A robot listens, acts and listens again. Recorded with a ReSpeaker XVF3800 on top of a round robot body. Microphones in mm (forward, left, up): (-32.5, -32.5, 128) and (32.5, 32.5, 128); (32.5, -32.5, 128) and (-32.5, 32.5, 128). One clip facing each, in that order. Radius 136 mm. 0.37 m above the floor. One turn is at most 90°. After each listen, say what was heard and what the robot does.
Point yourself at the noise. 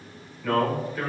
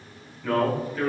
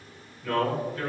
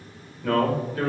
The man speaking: 130° left. Turn 90° left.
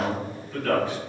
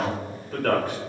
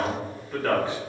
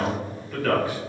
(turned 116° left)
The man speaking is now 15° left. Turn 15° left.
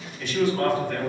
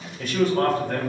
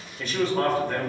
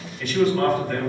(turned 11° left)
Found it: a man speaking, straight ahead, 1 to 2 m away.